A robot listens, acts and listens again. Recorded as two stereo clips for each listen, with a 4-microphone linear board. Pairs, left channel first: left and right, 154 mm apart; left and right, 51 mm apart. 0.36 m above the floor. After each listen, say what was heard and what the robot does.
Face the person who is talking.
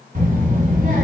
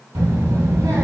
The child speaking: about 60° right or 120° right. Turn 60° right.
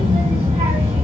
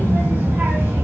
So it is at 45° right. Turn 45° right.
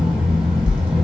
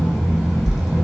Found it: a child speaking, straight ahead, 1 to 2 m away.